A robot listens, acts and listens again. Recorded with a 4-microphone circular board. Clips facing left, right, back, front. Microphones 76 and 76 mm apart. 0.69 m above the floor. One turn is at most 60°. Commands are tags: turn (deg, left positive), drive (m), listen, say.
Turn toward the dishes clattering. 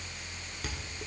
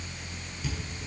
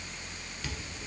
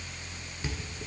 <turn deg="60"/>
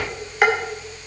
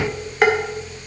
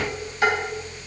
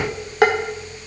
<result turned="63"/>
<say>Found it: dishes clattering, straight ahead, 1 to 2 m away.</say>